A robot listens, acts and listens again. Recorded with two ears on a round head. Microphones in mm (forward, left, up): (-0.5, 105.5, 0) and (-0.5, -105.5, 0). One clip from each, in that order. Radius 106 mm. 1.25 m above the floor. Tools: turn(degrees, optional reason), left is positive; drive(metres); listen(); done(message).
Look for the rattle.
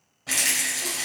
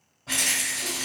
turn(degrees=50, reason="The rattle: about 50° left or 130° left.")
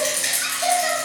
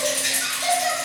turn(degrees=75, reason="So it is at 75° left.")
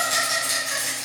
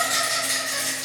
turn(degrees=10, reason="The rattle is now 10° left.")
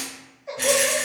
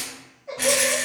done("Found it: a rattle, straight ahead, 1 to 2 m away.")